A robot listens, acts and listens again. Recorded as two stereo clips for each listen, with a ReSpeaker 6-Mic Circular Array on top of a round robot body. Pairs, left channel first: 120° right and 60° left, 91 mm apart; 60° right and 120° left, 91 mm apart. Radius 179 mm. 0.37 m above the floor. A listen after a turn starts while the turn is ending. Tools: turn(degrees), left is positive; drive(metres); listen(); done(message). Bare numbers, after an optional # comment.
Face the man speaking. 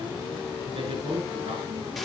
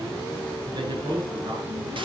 # The man speaking: 80° left.
turn(80)
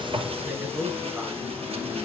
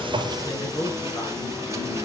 # The man speaking is now 15° right.
turn(-15)
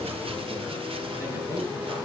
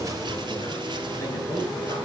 done("Facing the man speaking.")